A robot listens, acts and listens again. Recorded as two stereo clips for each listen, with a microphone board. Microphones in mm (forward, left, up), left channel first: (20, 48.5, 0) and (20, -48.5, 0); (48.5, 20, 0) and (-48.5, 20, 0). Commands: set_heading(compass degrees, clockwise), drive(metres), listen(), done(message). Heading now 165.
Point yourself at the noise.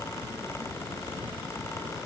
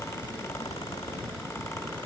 listen()
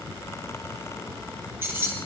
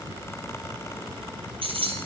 set_heading(325)
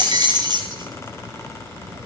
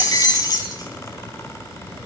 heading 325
set_heading(15)
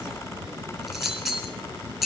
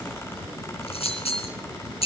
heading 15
done("Found it: keys jangling, straight ahead, 2 to 4 m away.")